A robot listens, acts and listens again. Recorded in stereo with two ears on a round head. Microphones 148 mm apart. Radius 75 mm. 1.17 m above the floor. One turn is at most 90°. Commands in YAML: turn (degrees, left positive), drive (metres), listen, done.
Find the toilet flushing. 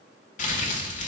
listen: true
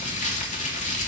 listen: true
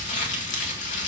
done: "I can't make out a toilet flushing to turn to."